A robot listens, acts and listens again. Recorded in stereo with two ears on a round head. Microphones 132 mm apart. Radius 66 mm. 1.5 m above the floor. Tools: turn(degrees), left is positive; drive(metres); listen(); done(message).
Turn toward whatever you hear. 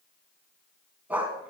turn(degrees=-30)
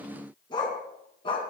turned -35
turn(degrees=35)
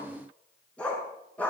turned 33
turn(degrees=10)
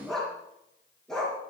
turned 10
done("Facing the dog barking.")